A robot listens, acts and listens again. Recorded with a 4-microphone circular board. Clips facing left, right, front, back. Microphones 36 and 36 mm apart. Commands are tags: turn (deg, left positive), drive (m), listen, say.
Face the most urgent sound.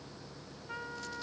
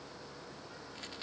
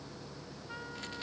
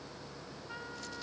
<listen/>
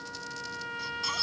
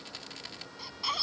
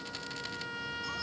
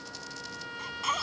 <turn deg="-165"/>
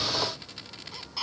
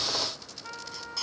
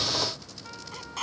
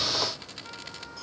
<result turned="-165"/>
<turn deg="20"/>
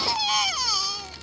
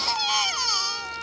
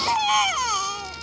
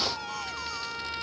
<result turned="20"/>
<say>Facing the baby crying.</say>